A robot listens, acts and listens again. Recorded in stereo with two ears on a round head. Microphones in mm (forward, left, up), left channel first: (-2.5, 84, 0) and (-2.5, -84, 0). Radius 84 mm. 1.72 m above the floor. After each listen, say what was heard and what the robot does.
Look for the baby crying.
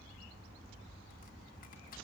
Keep listening.
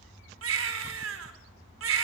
Turn 90° right.
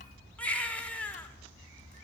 Facing the baby crying, over 4 m away.